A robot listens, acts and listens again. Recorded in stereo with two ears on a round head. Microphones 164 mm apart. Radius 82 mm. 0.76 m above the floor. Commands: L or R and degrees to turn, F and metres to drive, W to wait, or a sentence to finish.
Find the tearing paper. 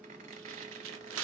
R90
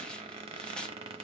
Facing the tearing paper.